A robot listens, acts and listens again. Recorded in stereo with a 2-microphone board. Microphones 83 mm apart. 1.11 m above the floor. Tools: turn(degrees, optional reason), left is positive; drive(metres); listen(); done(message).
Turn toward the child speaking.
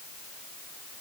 listen()
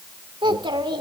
turn(degrees=-75, reason="The child speaking: about 75° right or 105° right.")
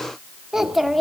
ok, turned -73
done("Facing the child speaking, 1 to 2 m away.")